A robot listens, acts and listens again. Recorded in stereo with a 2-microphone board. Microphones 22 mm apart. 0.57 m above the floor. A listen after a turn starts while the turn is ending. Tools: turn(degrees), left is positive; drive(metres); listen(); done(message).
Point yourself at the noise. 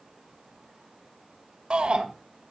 turn(degrees=-55)
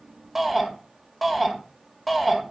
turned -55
done("Facing the shout, 1 to 2 m away.")